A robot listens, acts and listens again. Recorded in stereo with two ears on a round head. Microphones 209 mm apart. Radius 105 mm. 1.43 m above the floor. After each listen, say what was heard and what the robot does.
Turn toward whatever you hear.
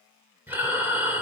Turn 30° right.
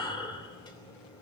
So it is at 20° left. Turn 20° left.
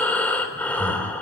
Found it: breathing, straight ahead.